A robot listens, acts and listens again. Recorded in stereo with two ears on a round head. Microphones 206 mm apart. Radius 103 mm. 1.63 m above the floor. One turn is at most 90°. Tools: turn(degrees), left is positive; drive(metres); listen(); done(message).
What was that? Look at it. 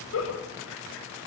turn(degrees=65)
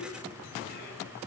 listen()
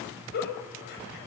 turn(degrees=50)
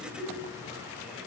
done("Facing the giggle.")